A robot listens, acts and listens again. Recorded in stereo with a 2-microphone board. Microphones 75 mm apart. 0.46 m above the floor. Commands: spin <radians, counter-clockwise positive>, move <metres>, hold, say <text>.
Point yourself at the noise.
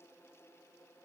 hold
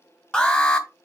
spin 0.52
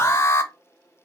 spin 2.44
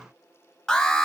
spin 0.26
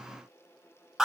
say Found it: an alarm, straight ahead, 1 to 2 m away.